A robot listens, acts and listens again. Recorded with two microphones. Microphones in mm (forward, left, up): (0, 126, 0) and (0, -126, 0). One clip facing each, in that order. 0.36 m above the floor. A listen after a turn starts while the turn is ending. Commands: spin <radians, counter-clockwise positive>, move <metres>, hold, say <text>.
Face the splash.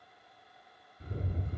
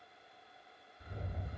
hold
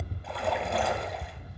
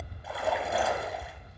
spin -0.52
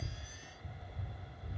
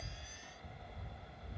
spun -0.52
hold
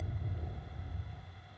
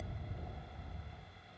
say I heard a splash, but can't make it out now. It was about 25° left or 145° right.